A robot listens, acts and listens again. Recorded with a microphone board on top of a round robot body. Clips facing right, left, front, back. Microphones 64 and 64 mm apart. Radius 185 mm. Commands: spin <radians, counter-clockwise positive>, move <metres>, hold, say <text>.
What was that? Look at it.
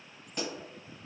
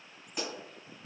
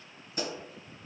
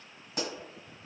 spin 3.05
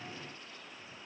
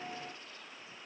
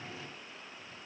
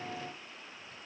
say Facing where the pop came from. I can't hear it now.